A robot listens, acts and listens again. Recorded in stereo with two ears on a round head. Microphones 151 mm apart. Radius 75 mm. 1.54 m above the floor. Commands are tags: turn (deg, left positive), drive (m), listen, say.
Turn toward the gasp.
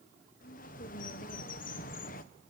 <listen/>
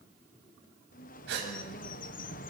<turn deg="-75"/>
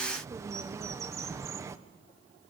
<listen/>
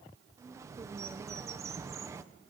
<say>I heard a gasp, but can't make it out now. It was about straight ahead or 30° right.</say>